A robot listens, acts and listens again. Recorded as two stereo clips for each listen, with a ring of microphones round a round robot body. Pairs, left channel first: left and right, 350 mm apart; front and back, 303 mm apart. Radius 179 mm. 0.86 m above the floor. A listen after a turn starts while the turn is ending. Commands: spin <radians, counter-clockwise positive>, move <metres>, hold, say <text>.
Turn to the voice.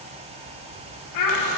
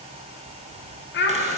spin 0.96
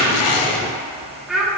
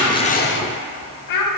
say Found it: a child speaking, straight ahead, 1 to 2 m away.